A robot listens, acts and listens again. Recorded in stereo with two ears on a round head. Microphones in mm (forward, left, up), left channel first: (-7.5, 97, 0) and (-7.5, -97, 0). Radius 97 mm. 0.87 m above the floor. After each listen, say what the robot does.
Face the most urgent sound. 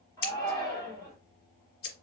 Turn 15° left.
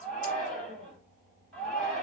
Found it: a shout, straight ahead.